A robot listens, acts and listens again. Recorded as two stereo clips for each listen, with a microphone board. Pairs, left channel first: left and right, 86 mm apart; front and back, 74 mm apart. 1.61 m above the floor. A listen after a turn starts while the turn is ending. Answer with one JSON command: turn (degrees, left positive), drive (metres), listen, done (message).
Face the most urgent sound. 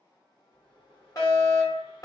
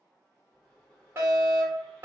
{"turn": 130}
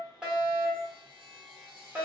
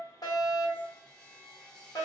{"turn": -30}
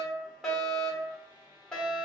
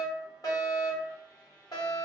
{"turn": 10}
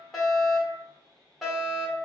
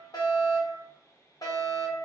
{"done": "Found it: a fire alarm, straight ahead, 1 to 2 m away."}